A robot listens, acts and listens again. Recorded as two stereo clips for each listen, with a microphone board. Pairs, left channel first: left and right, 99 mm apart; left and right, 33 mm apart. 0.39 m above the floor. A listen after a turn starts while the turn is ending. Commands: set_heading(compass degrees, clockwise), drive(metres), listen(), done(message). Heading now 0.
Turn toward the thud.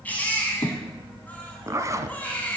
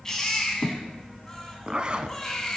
set_heading(285)
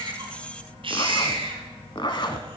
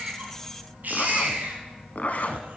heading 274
listen()
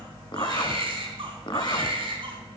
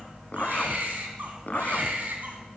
done("I heard a thud, but can't make it out now. It was about 10° right or 20° left.")